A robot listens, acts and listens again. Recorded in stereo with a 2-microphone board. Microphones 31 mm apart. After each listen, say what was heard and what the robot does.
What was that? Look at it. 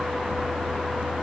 Keep listening.
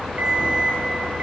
The alarm clock: about 60° right or 120° right. Turn 60° right.
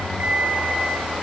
So it is at 55° right. Turn 55° right.
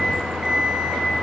The alarm clock is now 15° right. Turn 15° right.
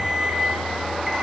Found it: an alarm clock, straight ahead, over 4 m away.